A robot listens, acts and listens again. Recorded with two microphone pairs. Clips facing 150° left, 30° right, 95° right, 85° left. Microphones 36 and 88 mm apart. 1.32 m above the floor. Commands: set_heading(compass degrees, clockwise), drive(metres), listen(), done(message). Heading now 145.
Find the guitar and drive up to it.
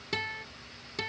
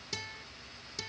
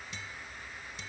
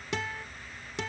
set_heading(50)
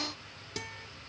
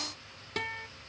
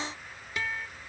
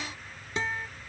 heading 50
set_heading(30)
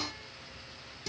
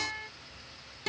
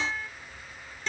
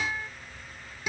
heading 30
drive(1.0)
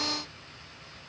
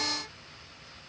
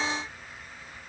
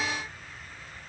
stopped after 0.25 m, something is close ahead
listen()
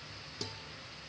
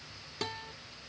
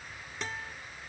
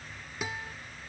done("Something is in my way. I am facing the guitar but have not reached it.")